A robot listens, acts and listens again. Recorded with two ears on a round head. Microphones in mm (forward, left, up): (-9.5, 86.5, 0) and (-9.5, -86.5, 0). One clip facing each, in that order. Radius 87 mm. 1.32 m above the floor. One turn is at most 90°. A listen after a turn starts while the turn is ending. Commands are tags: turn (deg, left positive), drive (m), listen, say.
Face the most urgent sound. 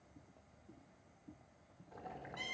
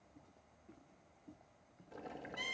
<listen/>
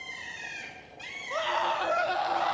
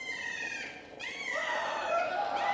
<turn deg="75"/>
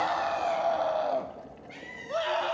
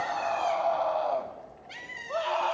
<turn deg="15"/>
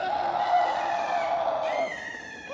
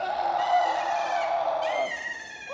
<say>Found it: a scream, straight ahead, 1 to 2 m away.</say>